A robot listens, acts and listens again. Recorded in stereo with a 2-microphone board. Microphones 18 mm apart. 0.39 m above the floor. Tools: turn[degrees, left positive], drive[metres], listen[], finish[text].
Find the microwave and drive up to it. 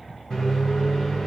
Thought: The microwave: about 40° left or 140° left.
Action: turn[40]
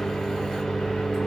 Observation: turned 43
Thought: So it is at 90° left.
Action: turn[90]
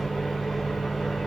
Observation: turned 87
Action: drive[1.0]
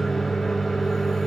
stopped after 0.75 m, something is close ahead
Thought: The microwave is now 10° left.
Action: turn[10]
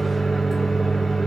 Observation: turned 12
Action: finish[Arrived at the microwave, straight ahead.]